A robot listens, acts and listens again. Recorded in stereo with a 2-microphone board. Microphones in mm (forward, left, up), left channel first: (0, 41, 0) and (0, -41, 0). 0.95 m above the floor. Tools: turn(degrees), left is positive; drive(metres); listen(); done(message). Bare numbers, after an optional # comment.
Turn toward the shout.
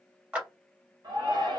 # The shout: about 60° right or 120° right.
turn(-60)
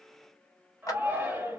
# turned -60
# So it is at 40° right.
turn(-40)
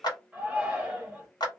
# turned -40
# The shout is now 20° right.
turn(-20)
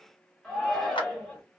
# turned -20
done("Facing the shout.")